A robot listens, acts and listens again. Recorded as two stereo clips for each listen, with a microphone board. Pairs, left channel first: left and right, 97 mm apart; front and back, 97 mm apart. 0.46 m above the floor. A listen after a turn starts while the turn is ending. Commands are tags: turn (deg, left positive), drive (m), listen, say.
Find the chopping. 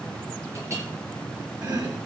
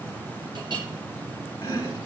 <turn deg="-50"/>
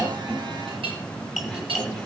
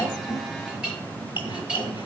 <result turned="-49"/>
<say>Facing the chopping, 1 to 2 m away.</say>